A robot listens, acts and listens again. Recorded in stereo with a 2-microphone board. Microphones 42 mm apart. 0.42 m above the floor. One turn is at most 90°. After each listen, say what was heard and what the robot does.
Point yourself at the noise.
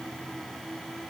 Keep listening.
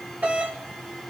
The doorbell: about 45° right or 135° right. Turn 45° right.
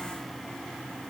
Keep listening.
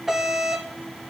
So it is at 10° right. Turn 10° right.
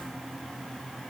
Keep listening.
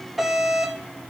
Found it: a doorbell, straight ahead, 2 to 4 m away.